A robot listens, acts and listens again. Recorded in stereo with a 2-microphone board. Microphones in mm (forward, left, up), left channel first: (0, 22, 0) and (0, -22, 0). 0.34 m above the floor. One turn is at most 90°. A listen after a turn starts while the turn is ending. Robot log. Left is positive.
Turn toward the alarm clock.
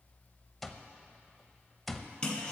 cmd yaw +30
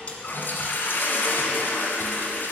cmd idle
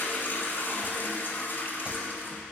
cmd idle
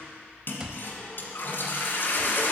note: So it is at 30° right.
cmd yaw -30
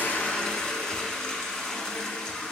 cmd idle
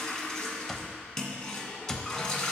end: Facing the alarm clock, under 1 m away.